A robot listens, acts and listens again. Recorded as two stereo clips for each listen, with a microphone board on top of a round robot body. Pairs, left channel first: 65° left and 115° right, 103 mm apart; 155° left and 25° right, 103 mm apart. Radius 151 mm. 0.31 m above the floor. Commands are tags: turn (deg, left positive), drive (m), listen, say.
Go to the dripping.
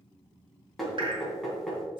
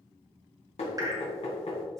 <turn deg="-75"/>
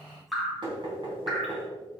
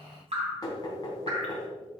<turn deg="-25"/>
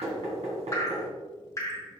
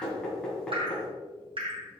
<turn deg="10"/>
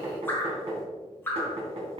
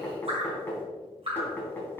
<drive m="1.0"/>
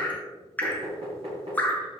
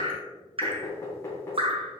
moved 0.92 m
<drive m="1.0"/>
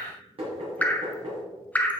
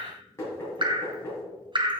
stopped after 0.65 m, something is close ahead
<say>Arrived at the dripping, straight ahead.</say>